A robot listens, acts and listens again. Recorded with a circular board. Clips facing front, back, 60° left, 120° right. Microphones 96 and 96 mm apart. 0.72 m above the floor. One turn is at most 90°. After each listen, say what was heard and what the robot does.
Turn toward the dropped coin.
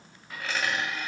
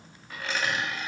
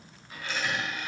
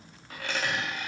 The dropped coin: 90° right. Turn 90° right.
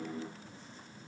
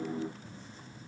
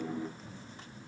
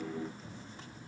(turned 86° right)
I heard a dropped coin from this way, but can't make it out now.